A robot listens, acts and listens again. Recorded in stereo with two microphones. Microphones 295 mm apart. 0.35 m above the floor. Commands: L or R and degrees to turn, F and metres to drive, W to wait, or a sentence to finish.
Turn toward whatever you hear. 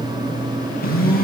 L30
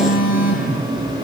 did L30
L120
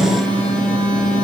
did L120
Facing the phone buzzing.